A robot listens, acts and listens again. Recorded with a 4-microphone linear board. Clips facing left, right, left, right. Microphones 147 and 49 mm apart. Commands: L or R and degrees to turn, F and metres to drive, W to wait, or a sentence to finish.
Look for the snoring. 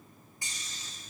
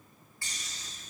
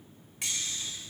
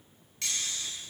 R75
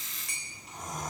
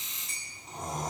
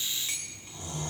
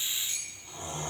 R30
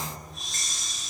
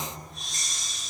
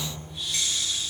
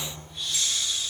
Found it: snoring, straight ahead, 2 to 4 m away.